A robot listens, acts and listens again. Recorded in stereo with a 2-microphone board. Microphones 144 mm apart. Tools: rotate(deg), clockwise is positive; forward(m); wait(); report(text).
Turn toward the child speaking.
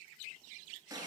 wait()
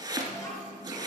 rotate(-25)
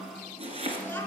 rotate(-30)
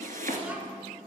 wait()
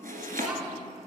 wait()
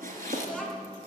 rotate(-10)
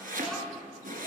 report("Facing the child speaking, 2 to 4 m away.")